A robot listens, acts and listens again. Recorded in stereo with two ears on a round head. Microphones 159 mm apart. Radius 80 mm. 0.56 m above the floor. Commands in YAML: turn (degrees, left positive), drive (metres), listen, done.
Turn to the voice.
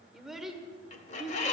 turn: 30
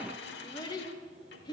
turn: 150
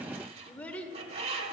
turn: 10
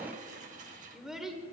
done: "Found it: a child speaking, straight ahead."